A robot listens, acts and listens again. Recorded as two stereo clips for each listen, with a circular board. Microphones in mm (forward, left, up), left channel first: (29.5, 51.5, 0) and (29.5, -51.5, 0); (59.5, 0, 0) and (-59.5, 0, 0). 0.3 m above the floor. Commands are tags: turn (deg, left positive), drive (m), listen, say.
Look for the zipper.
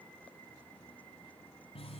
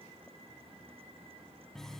<listen/>
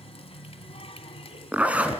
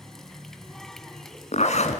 <turn deg="-15"/>
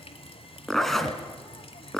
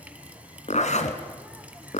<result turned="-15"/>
<say>Found it: a zipper, straight ahead, 2 to 4 m away.</say>